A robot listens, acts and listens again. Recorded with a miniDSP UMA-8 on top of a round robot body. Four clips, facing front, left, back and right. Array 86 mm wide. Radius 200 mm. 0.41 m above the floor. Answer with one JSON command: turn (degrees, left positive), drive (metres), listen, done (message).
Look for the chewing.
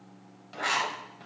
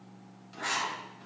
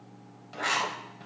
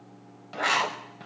{"listen": true}
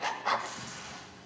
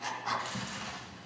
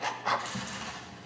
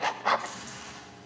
{"turn": 155}
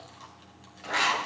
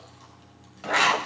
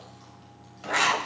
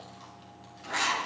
{"listen": true}
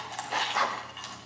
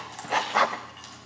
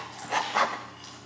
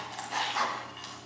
{"turn": -10}
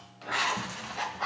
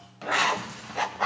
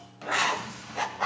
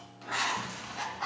{"done": "Facing the chewing."}